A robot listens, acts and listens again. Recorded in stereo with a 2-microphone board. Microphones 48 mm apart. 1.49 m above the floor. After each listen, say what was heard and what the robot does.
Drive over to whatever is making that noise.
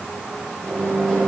The microwave: about 15° left or 165° left. Turn 15° left.
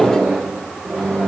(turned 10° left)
Drive 1.0 m forward.
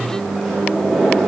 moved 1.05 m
Drive 1.0 m forward.
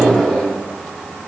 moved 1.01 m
Drive 1.0 m forward.
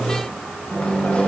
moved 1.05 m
The microwave is now 25° left. Turn 25° left.
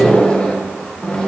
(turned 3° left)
The microwave is now 20° left. Turn 20° left.
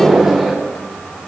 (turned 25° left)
Drive 1.0 m forward.
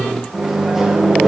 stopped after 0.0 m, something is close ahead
The microwave is now 10° right. Turn 10° right.
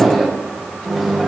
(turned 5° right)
Arrived at the microwave, straight ahead.